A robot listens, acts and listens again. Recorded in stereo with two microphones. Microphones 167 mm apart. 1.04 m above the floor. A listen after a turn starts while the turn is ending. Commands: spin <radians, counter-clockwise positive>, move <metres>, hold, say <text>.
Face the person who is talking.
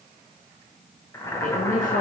spin 0.96
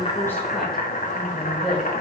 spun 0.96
say Facing the woman speaking.